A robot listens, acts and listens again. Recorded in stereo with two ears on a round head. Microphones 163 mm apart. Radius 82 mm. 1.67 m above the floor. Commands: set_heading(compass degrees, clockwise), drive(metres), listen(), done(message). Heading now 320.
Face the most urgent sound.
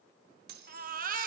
set_heading(10)
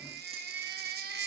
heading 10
set_heading(80)
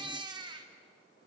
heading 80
set_heading(105)
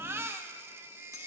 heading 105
set_heading(120)
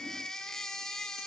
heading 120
done("Facing the baby crying.")